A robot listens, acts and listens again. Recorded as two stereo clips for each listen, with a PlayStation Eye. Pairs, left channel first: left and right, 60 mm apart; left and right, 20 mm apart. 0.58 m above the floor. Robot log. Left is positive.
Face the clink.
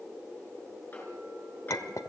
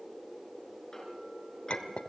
note: The clink: about 70° left or 110° left.
cmd yaw +70
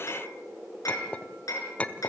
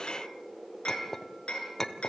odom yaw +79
note: So it is at 25° left.
cmd yaw +25
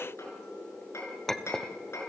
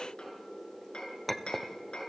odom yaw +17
note: The clink is now 10° left.
cmd yaw +10
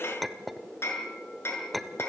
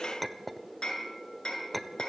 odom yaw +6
end: Found it: a clink, straight ahead.